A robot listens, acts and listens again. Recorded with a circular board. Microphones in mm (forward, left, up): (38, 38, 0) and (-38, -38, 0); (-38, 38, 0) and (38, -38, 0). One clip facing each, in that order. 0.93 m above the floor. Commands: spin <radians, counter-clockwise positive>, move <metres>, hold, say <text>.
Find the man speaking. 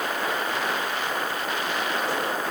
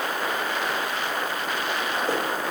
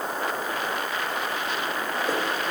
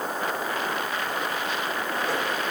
hold
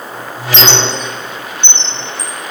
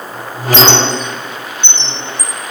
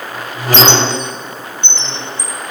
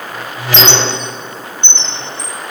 hold
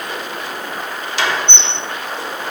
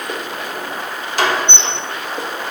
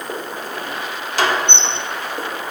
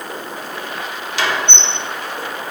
say I can't make out a man speaking to turn to.